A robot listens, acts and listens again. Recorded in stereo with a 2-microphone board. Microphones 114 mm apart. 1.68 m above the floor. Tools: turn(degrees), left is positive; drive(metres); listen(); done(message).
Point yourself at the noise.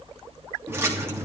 turn(degrees=-25)
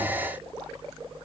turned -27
listen()
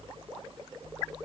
done("I heard a splash, but can't make it out now. It was about 5° left or 130° right.")